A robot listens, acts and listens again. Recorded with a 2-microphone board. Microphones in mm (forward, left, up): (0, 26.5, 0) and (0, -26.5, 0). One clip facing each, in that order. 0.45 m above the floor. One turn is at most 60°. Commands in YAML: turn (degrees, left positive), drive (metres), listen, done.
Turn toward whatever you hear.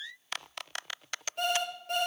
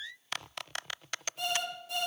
turn: 60
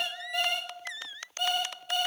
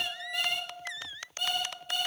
done: "Facing the alarm clock, over 4 m away."